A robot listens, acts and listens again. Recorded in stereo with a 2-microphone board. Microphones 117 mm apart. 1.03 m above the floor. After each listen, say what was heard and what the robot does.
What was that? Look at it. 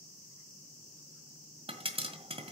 The pop: about 55° right or 125° right. Turn 55° right.
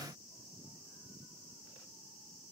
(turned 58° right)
Keep listening.
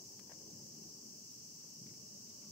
I heard a pop, but can't make it out now. It was about 5° left or 70° right.